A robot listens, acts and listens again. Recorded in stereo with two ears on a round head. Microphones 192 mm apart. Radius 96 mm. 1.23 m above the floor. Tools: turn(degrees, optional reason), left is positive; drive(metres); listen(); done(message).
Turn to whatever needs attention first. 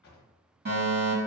turn(degrees=-50, reason="The fire alarm: about 50° right or 130° right.")
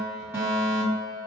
turn(degrees=-15, reason="So it is at 15° right.")
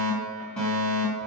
done("Facing the fire alarm.")